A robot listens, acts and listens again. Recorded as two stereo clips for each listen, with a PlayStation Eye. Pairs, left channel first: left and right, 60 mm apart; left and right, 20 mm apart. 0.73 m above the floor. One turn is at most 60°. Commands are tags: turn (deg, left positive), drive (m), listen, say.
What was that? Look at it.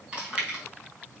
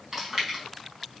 <turn deg="-20"/>
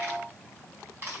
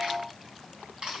<turn deg="-60"/>
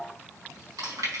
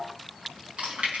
<turn deg="-60"/>
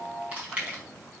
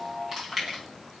<turn deg="-20"/>
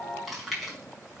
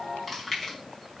<say>Found it: chewing, straight ahead.</say>